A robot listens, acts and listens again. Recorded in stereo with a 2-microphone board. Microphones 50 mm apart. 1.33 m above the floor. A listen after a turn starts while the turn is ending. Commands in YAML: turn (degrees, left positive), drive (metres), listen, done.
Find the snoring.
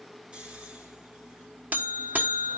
turn: -25
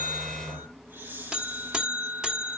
turn: -135
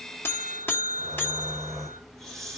done: "Facing the snoring."